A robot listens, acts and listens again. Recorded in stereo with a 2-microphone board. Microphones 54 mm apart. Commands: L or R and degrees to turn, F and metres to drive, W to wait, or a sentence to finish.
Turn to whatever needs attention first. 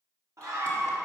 R70
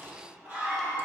R35
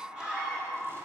R25
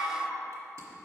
Found it: a scream, straight ahead, 1 to 2 m away.